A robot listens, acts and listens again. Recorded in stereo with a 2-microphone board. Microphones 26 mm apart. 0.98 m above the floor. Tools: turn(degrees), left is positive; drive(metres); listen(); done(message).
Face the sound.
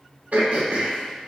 turn(degrees=-90)
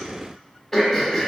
turn(degrees=10)
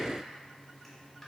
listen()
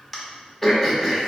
done("Found it: throat clearing, straight ahead, 1 to 2 m away.")